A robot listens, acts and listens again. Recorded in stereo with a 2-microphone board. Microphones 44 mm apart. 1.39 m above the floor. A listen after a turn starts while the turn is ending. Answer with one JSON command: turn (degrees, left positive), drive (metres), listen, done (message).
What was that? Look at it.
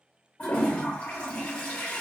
{"turn": 30}
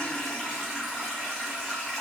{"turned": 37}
{"done": "Facing the toilet flushing."}